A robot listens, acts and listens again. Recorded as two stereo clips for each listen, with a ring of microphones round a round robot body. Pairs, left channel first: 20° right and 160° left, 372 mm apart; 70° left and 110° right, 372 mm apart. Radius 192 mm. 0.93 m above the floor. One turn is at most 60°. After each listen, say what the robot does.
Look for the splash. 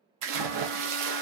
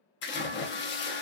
Turn 60° left.
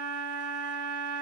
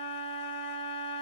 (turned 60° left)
Turn 60° left.
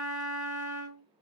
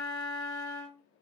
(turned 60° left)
Turn 10° left.
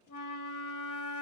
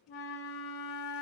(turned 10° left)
Facing where the splash came from. I can't hear it now.